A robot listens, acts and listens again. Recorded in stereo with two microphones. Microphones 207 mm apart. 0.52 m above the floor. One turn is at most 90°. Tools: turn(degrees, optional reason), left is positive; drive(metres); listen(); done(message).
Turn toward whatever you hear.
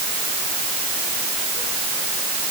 listen()
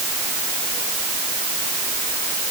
listen()
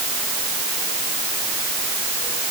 done("I can't make out anything to turn to.")